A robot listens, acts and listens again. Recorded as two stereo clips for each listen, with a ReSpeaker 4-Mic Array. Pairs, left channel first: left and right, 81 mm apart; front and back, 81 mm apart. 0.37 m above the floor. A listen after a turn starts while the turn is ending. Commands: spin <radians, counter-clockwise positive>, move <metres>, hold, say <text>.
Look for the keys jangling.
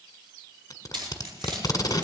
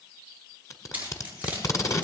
spin -1.92
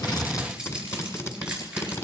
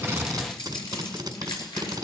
spin -0.17
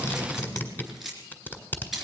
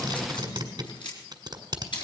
say Found it: keys jangling, straight ahead, over 4 m away.